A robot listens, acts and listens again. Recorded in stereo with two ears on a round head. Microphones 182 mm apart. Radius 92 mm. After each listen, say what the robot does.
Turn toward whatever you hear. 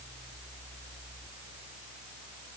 Keep listening.
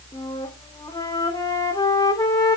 Turn 20° left.
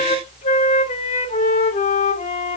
Turn 145° left.
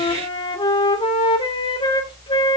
Turn 25° left.
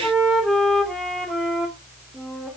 Facing the flute, 2 to 4 m away.